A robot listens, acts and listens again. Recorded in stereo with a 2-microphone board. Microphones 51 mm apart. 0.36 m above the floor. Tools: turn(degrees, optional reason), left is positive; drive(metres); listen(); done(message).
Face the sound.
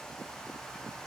listen()
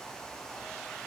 listen()
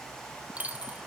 turn(degrees=-30, reason="The dropped coin: about 30° right or 150° right.")
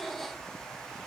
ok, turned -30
listen()
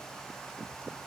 done("I heard a dropped coin, but can't make it out now. It was about straight ahead or 120° right.")